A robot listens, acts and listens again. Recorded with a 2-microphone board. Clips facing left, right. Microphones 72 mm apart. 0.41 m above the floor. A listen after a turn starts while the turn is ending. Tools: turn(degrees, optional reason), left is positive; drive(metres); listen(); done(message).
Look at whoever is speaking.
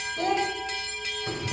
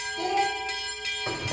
turn(degrees=40, reason="The child speaking: about 40° left or 140° left.")
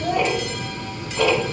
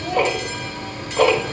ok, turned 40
listen()
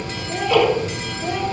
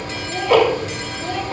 listen()
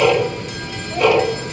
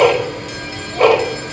done("I heard a child speaking, but can't make it out now. It was about straight ahead or 100° left.")